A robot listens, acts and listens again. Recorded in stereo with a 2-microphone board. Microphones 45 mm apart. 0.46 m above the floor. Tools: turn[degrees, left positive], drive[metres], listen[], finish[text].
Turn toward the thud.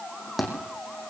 Action: turn[30]
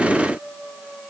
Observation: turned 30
Action: listen[]
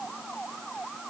Action: finish[I heard a thud, but can't make it out now. It was about 30° right or 150° left.]